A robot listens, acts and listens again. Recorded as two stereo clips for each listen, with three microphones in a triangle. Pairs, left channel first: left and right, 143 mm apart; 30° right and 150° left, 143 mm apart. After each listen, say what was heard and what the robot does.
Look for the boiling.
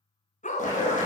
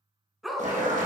The boiling: 120° left. Turn 120° left.
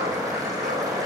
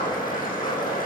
The boiling is now 25° right. Turn 25° right.
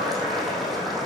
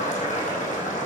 Facing the boiling, over 4 m away.